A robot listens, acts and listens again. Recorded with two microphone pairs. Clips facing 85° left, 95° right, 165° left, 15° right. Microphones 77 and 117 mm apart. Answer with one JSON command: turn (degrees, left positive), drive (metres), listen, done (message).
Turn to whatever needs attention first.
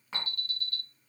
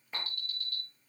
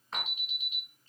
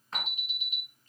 {"turn": 30}
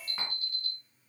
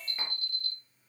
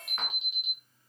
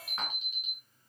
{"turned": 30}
{"turn": 20}
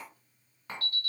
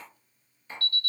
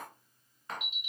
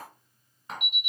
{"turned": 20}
{"done": "Found it: an alarm, straight ahead, 1 to 2 m away."}